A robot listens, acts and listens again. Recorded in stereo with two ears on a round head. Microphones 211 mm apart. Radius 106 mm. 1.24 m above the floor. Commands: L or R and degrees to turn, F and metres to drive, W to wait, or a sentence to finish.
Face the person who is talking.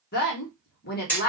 L40
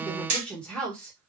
Found it: a woman speaking, straight ahead, 1 to 2 m away.